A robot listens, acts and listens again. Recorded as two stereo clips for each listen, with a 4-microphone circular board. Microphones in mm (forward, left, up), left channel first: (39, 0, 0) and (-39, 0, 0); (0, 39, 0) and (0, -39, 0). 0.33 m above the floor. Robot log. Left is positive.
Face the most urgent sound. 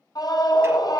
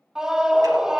note: The scream: 10° right.
cmd yaw -10
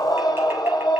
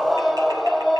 end: Found it: a scream, straight ahead, 1 to 2 m away.